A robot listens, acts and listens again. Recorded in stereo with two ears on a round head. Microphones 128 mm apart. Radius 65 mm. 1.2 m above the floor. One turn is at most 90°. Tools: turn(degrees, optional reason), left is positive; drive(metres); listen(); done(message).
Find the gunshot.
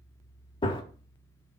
turn(degrees=30, reason="The gunshot: about 30° left or 150° left.")
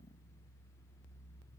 listen()
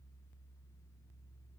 done("I heard a gunshot, but can't make it out now. It was about straight ahead or 120° left.")